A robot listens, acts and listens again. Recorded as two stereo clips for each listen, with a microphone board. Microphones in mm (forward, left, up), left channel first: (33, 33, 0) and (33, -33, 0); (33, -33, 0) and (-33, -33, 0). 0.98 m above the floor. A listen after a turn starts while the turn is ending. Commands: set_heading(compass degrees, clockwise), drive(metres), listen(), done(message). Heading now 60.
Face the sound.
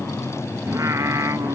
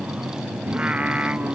set_heading(170)
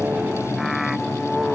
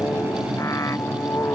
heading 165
done("Found it: singing, straight ahead.")